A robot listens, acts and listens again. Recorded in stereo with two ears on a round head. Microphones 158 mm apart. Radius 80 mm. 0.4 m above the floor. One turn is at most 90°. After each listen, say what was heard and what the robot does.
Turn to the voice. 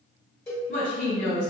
The woman speaking: about 65° left or 115° left. Turn 65° left.
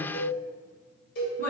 So it is at 15° left. Turn 15° left.
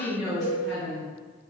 Found it: a woman speaking, straight ahead, 1 to 2 m away.